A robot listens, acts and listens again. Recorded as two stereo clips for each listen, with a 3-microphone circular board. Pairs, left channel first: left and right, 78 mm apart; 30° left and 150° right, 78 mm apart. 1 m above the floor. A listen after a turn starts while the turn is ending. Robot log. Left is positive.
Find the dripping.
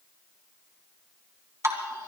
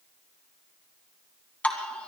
note: The dripping: 45° right.
cmd yaw -45
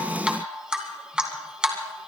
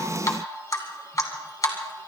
note: The dripping is now 10° right.
cmd yaw -10
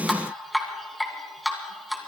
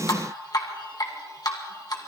end: Found it: dripping, straight ahead, 1 to 2 m away.